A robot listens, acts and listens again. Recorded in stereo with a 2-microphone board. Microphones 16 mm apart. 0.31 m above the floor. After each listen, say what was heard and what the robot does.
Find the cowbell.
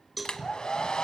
Turn 30° right.
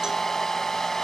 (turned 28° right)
Keep listening.
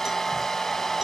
Keep listening.
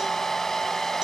I heard a cowbell, but can't make it out now. It was about 25° left or 145° right.